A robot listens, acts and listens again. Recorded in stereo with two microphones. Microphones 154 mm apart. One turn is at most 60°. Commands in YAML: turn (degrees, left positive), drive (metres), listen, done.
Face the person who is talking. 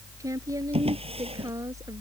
turn: -20
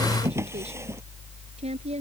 turn: -60
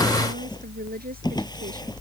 turn: -60
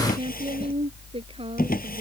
turn: -40
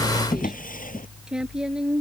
done: "Facing the woman speaking."